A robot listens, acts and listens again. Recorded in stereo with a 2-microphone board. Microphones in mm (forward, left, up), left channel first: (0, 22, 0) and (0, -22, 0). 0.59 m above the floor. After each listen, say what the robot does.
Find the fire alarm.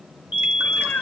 Turn 35° right.
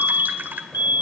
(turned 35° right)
Turn 100° right.
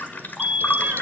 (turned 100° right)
Facing the fire alarm, 2 to 4 m away.